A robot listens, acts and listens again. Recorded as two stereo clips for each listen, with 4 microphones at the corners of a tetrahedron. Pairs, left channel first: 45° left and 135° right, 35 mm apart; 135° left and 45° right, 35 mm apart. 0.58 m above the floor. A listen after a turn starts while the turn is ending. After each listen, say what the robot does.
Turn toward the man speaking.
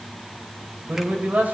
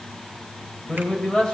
Turn 170° right.
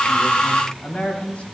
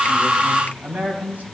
Turn 10° right.
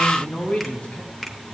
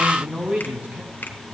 Turn 10° right.
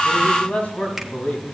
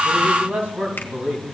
Found it: a man speaking, straight ahead, 2 to 4 m away.